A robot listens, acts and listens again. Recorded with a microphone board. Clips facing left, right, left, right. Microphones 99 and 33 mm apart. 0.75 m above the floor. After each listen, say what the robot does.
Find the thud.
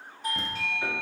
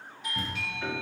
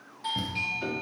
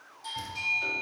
Turn 30° left.
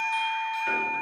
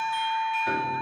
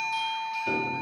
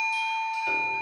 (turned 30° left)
Keep listening.
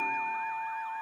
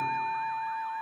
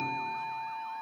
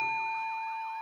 I heard a thud, but can't make it out now. It was about straight ahead or 120° left.